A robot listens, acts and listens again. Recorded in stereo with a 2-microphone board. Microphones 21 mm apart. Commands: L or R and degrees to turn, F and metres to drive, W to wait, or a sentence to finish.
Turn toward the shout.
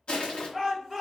L30
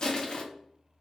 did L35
W
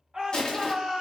R35
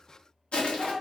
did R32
Facing the shout, 1 to 2 m away.